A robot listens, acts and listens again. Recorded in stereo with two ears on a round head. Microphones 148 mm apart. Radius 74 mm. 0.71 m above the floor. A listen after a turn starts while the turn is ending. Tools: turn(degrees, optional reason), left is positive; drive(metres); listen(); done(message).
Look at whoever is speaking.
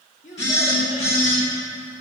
turn(degrees=45, reason="The child speaking: about 45° left or 135° left.")
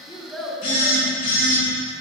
done("Facing the child speaking.")